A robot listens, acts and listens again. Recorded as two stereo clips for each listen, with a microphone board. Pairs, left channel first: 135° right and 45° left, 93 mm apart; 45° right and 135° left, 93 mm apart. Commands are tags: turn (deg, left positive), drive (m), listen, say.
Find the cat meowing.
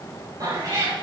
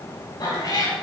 <say>Facing the cat meowing, 2 to 4 m away.</say>